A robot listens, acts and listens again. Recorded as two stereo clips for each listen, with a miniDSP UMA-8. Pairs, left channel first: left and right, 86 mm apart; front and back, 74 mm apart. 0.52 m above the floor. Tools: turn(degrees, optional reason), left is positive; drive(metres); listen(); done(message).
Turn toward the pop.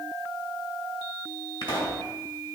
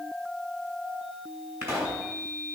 turn(degrees=125, reason="The pop: 125° left.")
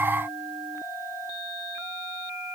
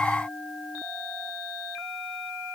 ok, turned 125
done("Facing where the pop came from. I can't hear it now.")